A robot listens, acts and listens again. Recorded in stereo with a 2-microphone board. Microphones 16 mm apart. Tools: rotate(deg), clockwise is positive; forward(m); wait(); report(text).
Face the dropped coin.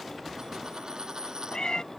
rotate(60)
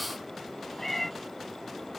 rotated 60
wait()
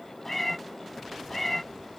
report("I heard a dropped coin, but can't make it out now. It was about straight ahead or 60° right.")